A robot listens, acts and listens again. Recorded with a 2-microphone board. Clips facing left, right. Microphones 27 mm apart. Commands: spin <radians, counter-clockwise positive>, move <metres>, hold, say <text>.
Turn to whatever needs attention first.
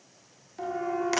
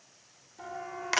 spin 0.61
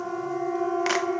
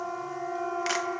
say Found it: a siren, straight ahead.